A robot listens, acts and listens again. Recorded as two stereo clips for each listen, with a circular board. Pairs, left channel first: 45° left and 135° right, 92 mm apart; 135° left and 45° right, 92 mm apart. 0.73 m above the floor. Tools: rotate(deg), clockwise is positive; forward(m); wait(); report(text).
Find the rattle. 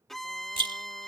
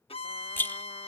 rotate(160)
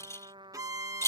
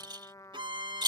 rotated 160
rotate(10)
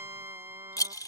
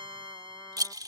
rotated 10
report("Facing the rattle.")